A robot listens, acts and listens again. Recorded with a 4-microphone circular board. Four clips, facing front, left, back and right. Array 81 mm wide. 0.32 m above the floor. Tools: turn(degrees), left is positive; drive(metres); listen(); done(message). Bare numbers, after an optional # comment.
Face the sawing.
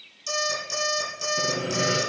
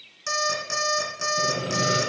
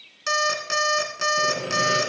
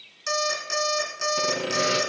# The sawing: 90° right.
turn(-90)
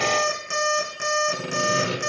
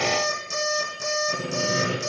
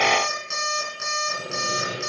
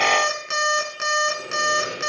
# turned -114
# The sawing is now 25° left.
turn(25)
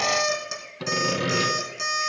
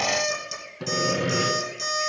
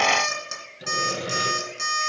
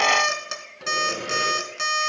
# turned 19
done("Found it: sawing, straight ahead, 2 to 4 m away.")